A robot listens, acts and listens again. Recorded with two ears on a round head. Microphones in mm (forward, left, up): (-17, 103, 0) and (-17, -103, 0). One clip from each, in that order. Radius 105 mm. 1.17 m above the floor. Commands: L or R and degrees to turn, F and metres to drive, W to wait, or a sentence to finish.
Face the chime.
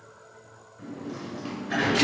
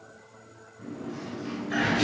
W
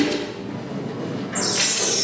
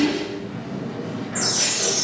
L30
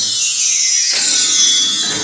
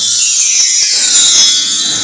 R30
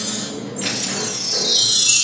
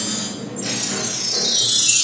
Facing the chime, 1 to 2 m away.